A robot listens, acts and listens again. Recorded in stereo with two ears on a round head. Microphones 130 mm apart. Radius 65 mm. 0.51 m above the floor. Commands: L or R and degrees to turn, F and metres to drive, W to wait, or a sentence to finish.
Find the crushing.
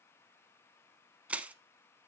R30
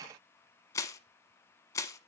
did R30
L20
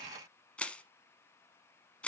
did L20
L10
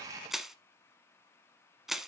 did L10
Found it: crushing, straight ahead.